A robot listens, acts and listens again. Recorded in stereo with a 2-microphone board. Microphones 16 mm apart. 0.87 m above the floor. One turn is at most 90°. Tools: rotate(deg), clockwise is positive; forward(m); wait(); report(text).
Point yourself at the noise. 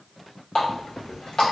rotate(-60)
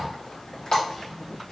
rotate(-60)
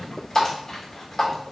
rotate(-35)
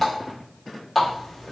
report("Found it: a running tap, straight ahead.")